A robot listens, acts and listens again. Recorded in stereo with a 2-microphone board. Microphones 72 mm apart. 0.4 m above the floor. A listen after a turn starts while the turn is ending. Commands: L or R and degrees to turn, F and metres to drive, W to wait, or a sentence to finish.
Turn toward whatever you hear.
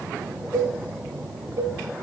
R50
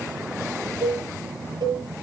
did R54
R75
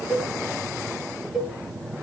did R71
Facing the cowbell.